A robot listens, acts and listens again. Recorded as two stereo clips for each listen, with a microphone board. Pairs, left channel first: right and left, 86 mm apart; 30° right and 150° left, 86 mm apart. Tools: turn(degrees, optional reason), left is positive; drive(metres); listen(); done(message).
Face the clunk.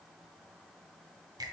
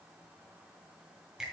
listen()
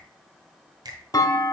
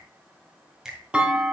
turn(degrees=-130, reason="The clunk: 130° right.")
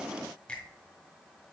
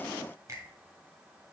done("I heard a clunk from this way, but can't make it out now.")